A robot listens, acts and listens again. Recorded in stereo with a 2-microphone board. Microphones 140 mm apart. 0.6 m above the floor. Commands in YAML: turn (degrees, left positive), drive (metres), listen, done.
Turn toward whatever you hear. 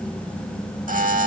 turn: -65
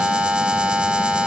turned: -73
turn: -10
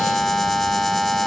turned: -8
done: "Found it: a buzzer, straight ahead."